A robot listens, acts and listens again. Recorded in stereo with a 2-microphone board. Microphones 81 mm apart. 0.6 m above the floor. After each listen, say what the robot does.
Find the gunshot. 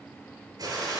Turn 55° right.
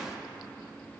Keep listening.
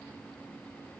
I heard a gunshot, but can't make it out now. It was about straight ahead or 70° right.